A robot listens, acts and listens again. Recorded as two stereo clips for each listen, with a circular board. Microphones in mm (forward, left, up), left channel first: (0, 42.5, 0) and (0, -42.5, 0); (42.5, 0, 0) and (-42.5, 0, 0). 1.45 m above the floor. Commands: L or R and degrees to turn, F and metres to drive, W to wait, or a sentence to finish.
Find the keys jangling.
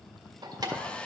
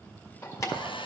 R50
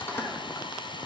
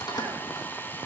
L30
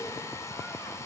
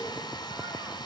W
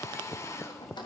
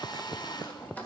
L70
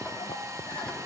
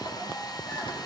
W
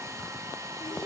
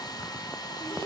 W
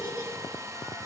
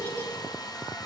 I heard keys jangling from this way, but can't make it out now.